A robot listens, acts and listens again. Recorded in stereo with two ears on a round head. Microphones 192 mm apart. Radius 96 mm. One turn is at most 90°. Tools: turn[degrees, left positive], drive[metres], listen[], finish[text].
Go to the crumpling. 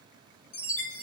Action: listen[]
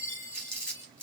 Action: turn[30]
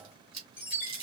Thought: So it is at 25° right.
Action: turn[-25]
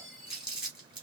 Action: drive[1.0]
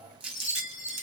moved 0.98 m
Action: drive[1.0]
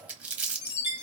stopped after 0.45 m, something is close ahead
Action: finish[Arrived at the crumpling, straight ahead.]